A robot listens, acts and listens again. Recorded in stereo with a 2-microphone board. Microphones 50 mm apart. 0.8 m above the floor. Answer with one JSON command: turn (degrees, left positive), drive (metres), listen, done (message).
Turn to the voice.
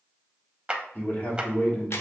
{"turn": 30}
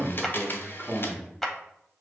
{"done": "Facing the man speaking, 1 to 2 m away."}